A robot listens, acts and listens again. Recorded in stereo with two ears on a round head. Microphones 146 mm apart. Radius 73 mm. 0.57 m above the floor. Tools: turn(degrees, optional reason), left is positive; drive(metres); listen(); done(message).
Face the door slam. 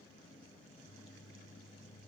listen()
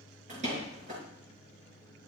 turn(degrees=-45, reason="The door slam: about 45° right or 135° right.")
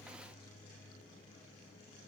listen()
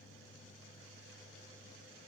done("I heard a door slam, but can't make it out now. It was about straight ahead or 90° right.")